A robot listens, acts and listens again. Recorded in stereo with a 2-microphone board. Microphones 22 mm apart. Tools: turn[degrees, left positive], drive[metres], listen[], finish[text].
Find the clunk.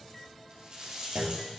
Action: turn[-90]
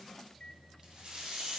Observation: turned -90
Action: finish[Facing where the clunk came from. I can't hear it now.]